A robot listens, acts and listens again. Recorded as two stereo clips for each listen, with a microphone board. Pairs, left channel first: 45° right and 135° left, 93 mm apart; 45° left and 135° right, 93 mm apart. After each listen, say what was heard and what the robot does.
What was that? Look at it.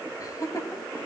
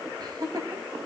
The laughter: 95° right. Turn 95° right.
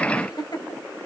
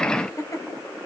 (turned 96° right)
Found it: laughter, straight ahead.